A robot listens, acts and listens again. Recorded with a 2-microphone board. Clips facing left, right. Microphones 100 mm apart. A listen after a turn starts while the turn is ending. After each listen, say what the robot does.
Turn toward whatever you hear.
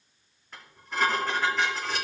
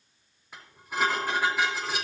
Turn 30° right.
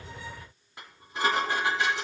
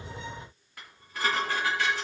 Turn 25° left.
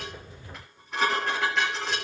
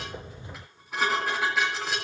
Facing the dishes clattering, 2 to 4 m away.